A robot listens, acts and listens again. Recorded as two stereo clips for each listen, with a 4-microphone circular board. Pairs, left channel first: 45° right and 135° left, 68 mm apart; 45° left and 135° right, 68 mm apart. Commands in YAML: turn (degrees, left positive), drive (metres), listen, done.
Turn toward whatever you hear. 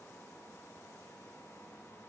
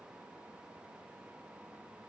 listen: true
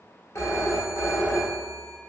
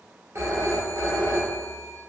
turn: -85
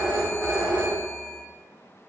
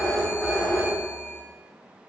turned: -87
done: "Found it: a phone ringing, straight ahead, under 1 m away."